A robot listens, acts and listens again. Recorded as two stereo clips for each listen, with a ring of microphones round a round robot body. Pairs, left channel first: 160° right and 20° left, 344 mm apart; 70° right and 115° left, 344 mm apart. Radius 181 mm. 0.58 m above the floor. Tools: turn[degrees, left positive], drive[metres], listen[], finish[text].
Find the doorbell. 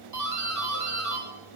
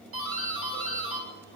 Thought: The doorbell: 60° left.
Action: turn[60]
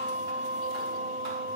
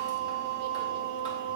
Action: listen[]
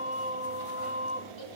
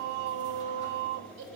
Action: listen[]
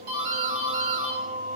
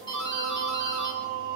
Thought: The doorbell is now 10° left.
Action: turn[10]
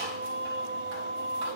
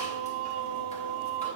Action: listen[]
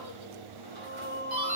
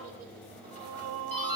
Action: finish[Found it: a doorbell, straight ahead.]